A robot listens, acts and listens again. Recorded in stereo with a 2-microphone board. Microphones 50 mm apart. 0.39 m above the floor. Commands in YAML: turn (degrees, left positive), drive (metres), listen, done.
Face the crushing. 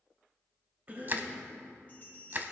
turn: -45
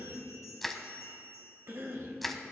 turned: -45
done: "Found it: crushing, straight ahead, under 1 m away."